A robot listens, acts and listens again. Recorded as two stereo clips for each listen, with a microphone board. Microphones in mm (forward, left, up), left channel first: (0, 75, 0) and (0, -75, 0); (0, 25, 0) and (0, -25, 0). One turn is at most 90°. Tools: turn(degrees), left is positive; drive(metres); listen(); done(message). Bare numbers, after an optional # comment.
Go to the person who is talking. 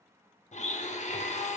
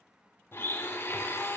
listen()
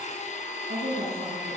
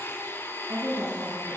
turn(-90)
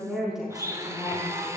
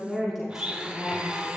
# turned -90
drive(1.0)
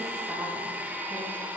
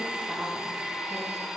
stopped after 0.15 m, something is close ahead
listen()
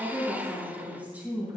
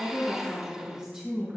# The woman speaking is now 10° right.
turn(-10)
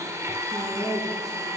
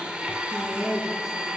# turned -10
done("Something is in my way. I am facing the woman speaking but have not reached it.")